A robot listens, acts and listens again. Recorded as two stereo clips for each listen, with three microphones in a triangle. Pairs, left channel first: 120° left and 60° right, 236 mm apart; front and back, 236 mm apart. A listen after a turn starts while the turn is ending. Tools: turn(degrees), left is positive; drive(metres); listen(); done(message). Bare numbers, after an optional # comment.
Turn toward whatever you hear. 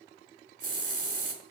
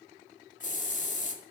# The hiss: 55° right.
turn(-55)
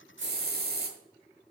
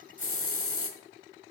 # The hiss is now 15° right.
turn(-15)
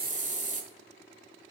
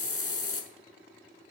done("Found it: a hiss, straight ahead, 1 to 2 m away.")